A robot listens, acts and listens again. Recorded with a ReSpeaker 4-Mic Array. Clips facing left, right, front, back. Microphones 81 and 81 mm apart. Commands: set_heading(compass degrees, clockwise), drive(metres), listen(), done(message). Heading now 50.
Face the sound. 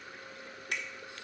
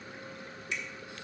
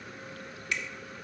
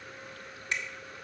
set_heading(290)
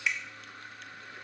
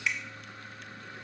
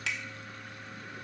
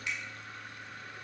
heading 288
done("Found it: a finger snap, straight ahead, under 1 m away.")